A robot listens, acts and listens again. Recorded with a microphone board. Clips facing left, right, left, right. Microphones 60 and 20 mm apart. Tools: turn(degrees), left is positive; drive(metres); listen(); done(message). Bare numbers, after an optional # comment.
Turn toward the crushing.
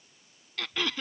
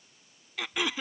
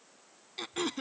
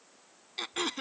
listen()
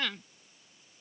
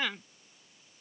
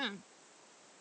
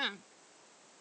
listen()
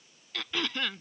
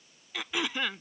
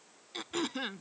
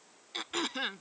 done("I can't make out crushing, only throat clearing.")